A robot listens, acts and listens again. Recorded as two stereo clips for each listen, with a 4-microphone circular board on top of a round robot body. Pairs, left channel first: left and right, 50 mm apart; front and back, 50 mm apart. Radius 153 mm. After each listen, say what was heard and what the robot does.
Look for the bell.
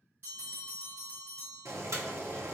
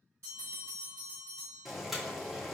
The bell: 140° right. Turn 140° right.
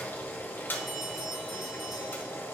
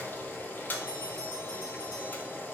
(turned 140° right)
Keep listening.
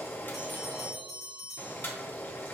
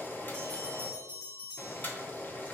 Found it: a bell, straight ahead.